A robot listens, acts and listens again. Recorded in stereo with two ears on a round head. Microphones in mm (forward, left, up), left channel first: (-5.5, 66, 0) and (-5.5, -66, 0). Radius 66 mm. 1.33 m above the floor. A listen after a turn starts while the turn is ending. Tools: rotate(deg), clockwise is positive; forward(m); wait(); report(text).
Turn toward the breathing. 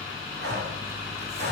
rotate(90)
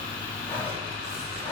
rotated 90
rotate(-10)
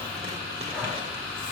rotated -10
wait()
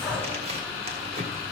report("Found it: breathing, straight ahead.")